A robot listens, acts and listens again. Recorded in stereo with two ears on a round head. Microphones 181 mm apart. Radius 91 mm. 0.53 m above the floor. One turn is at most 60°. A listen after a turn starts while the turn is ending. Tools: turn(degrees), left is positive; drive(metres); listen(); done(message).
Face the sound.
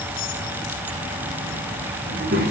turn(degrees=-45)
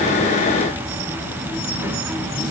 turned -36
turn(degrees=-10)
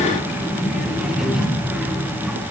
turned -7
done("Found it: a child speaking, straight ahead, over 4 m away.")